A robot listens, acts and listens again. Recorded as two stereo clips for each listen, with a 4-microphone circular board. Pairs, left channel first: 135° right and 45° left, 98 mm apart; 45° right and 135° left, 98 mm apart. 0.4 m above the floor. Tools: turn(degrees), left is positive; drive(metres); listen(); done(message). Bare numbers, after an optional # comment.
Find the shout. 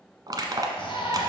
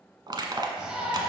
# The shout: 145° right.
turn(-145)
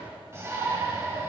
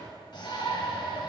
# The shout is now 15° right.
turn(-15)
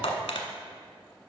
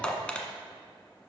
listen()
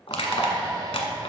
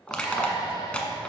done("Facing the shout.")